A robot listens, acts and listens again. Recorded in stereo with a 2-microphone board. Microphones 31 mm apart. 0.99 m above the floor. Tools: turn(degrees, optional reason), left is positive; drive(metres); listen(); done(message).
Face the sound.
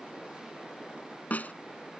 turn(degrees=60, reason="The snare drum: about 60° left or 120° left.")
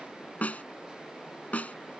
turn(degrees=55, reason="So it is at 55° left.")
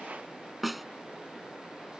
done("Facing the snare drum.")